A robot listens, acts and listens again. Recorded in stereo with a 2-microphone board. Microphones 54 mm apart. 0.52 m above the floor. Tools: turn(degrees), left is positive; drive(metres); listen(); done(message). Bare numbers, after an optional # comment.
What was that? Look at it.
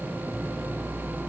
listen()
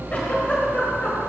# The giggle: about 30° left or 150° left.
turn(30)
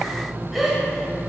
done("Found it: a giggle, straight ahead, 1 to 2 m away.")